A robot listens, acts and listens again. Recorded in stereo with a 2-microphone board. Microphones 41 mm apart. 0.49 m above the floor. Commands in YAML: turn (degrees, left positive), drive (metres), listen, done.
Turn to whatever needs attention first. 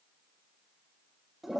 listen: true
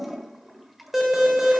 turn: -30
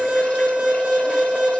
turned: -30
turn: -145
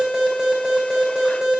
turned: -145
turn: -20
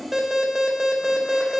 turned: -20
turn: -10
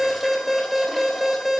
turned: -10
done: "Facing the alarm, 2 to 4 m away."